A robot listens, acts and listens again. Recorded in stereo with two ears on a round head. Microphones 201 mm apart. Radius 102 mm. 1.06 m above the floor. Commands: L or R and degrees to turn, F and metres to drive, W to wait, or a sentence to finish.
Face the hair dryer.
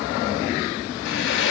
L55
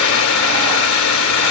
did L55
L65
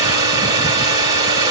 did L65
R20
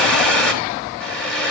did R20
Facing the hair dryer, 2 to 4 m away.